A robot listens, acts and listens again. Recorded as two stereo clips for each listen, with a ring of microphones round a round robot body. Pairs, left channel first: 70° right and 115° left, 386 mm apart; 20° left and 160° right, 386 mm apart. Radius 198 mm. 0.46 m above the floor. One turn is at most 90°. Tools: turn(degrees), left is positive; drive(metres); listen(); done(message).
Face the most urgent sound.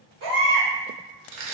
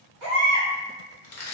turn(degrees=90)
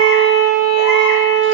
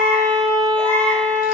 turn(degrees=70)
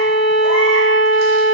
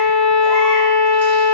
listen()
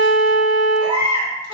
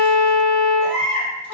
turn(degrees=35)
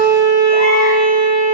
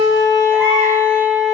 listen()
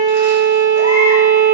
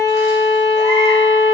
listen()
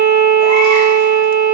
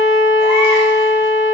done("I heard a baby crying from this way, but can't make it out now.")